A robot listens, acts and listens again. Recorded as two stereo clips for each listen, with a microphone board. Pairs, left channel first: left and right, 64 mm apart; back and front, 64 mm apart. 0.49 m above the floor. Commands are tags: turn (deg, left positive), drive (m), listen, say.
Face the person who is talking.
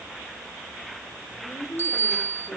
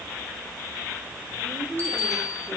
<turn deg="70"/>
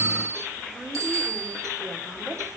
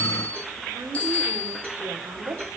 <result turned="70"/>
<say>Facing the woman speaking, 2 to 4 m away.</say>